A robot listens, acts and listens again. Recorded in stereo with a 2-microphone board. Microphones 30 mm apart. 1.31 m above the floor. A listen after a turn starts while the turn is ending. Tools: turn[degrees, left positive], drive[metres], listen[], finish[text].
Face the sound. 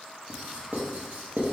Thought: The writing: about 60° right or 120° right.
Action: turn[-60]
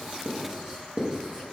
Thought: So it is at 20° right.
Action: turn[-20]
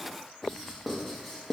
Action: finish[Found it: writing, straight ahead, 1 to 2 m away.]